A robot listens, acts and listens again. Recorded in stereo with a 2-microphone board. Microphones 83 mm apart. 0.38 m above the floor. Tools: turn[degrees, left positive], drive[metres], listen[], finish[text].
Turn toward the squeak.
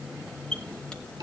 Action: turn[30]
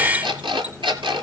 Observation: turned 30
Action: listen[]
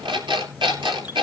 Action: listen[]
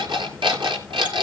Action: finish[I heard a squeak, but can't make it out now. It was about 15° right or 135° left.]